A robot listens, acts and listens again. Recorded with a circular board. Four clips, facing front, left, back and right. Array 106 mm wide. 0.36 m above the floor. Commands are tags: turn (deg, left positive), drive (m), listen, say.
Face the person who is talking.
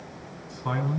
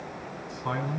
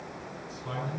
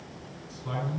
<turn deg="50"/>
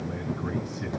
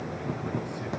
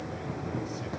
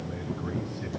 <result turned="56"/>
<say>Found it: a man speaking, straight ahead, over 4 m away.</say>